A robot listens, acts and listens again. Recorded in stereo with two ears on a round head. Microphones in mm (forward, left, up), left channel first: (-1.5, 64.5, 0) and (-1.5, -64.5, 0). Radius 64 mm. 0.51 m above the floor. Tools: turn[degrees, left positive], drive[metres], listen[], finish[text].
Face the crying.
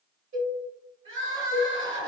Thought: The crying: about 35° right or 145° right.
Action: turn[-35]
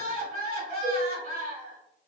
Thought: So it is at 105° right.
Action: turn[-105]
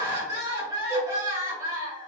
Thought: The crying is now 25° right.
Action: turn[-25]
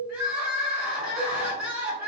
Thought: The crying is now 10° right.
Action: turn[-10]
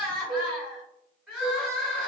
Action: finish[Found it: crying, straight ahead, 1 to 2 m away.]